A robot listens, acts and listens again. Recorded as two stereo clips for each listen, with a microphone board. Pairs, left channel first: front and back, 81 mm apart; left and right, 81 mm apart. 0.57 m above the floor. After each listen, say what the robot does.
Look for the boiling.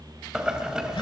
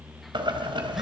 Turn 100° right.
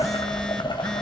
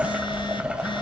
Turn 15° right.
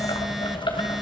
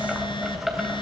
Found it: boiling, straight ahead, 2 to 4 m away.